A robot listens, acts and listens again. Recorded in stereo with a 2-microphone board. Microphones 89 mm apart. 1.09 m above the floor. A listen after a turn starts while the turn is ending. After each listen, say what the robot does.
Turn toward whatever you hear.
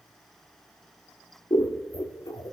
Turn 45° left.
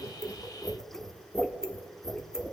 Found it: scissors, straight ahead.